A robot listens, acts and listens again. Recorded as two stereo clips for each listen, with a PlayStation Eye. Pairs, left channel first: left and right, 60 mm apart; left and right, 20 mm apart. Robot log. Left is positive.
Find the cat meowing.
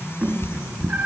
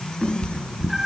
note: The cat meowing: about 35° right or 145° right.
cmd yaw -35
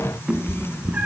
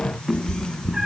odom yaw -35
note: The cat meowing: about 25° right or 155° right.
cmd yaw -25
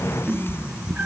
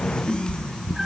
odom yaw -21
note: The cat meowing: about 25° right or 155° right.
cmd yaw -25
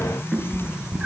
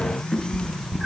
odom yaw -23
note: So it is at 15° right.
cmd yaw -15
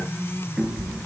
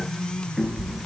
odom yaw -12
note: The cat meowing is now 10° right.
cmd yaw -10
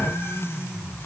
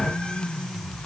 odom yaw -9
cmd idle
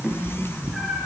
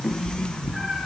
end: Facing the cat meowing.